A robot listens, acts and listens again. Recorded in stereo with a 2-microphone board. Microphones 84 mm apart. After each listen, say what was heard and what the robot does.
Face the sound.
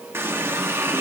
The running tap: about 30° right or 150° right. Turn 30° right.
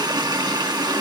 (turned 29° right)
So it is at 120° right. Turn 120° right.
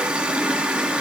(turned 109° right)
The running tap is now 15° right. Turn 15° right.
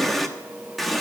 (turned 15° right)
Facing the running tap.